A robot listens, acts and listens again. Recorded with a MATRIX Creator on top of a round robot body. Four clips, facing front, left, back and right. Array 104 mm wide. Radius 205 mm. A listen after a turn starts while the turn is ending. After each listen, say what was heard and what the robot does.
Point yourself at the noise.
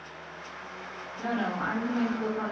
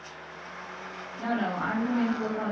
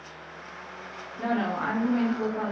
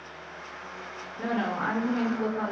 The woman speaking: 155° right. Turn 155° right.
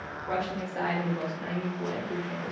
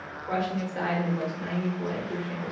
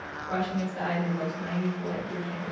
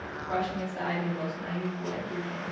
The woman speaking is now 40° left. Turn 40° left.
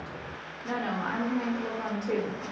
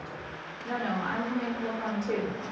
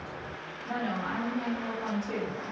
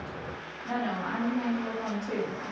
Facing the woman speaking.